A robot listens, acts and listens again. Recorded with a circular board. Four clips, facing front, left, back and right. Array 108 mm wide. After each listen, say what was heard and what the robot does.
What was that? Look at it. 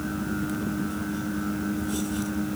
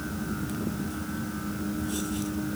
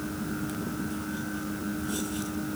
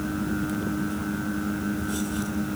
Keep listening.
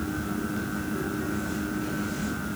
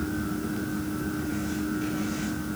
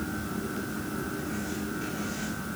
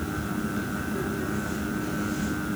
Keep listening.
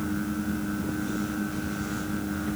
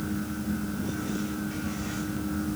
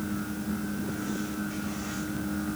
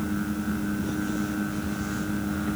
I can't make out anything to turn to.